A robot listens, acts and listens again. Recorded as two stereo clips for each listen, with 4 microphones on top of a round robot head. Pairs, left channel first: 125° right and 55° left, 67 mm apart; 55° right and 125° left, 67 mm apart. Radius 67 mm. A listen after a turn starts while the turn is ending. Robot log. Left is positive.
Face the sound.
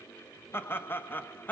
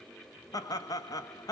note: The laughter: 65° right.
cmd yaw -65
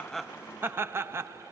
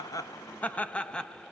note: The laughter is now 20° left.
cmd yaw +20
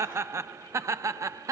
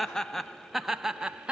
note: The laughter is now 55° left.
cmd yaw +55
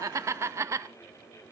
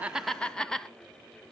note: The laughter is now 25° left.
cmd yaw +25
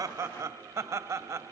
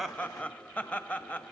note: The laughter is now 15° left.
cmd yaw +15
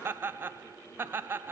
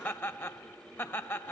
end: Facing the laughter, 1 to 2 m away.